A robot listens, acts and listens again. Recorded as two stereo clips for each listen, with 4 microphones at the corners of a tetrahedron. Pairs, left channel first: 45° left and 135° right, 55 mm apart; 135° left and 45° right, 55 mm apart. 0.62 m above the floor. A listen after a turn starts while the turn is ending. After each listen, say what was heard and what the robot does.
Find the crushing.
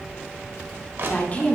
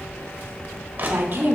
The crushing: 95° right. Turn 95° right.
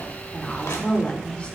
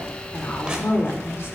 The crushing is now 25° left. Turn 25° left.
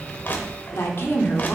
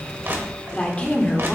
The crushing is now 10° right. Turn 10° right.
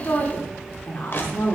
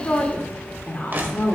Facing the crushing, 1 to 2 m away.